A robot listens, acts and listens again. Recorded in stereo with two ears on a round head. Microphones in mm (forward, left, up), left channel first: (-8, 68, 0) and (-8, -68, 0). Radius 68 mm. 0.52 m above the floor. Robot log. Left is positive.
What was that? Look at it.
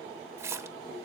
note: The splash: about 15° right or 165° right.
cmd yaw -15
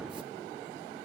cmd idle
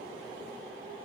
end: I heard a splash, but can't make it out now. It was about straight ahead or 150° right.